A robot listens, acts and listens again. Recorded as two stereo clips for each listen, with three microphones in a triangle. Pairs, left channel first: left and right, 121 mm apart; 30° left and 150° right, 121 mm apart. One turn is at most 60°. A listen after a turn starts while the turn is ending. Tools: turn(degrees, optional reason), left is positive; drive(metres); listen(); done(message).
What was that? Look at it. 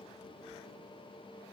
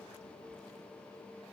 listen()
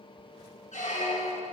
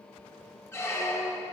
turn(degrees=60, reason="The squeak: 100° left.")
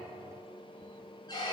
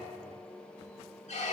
turn(degrees=40, reason="The squeak is now 40° left.")
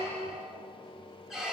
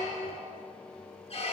done("Found it: a squeak, straight ahead, 1 to 2 m away.")